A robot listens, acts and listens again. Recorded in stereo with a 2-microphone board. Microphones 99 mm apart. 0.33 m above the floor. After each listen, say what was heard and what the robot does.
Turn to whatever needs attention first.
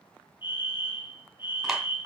The fire alarm: about 50° left or 130° left. Turn 50° left.
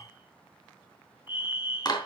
So it is at 70° left. Turn 70° left.
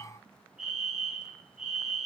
Facing the fire alarm.